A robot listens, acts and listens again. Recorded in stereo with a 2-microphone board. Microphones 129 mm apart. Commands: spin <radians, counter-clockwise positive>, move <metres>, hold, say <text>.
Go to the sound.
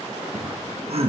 spin -1.05
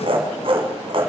spin -0.96
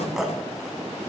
move 1.0
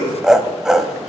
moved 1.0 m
move 1.0
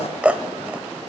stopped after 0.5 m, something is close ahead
spin -0.26
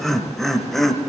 say Arrived at the laughter, straight ahead.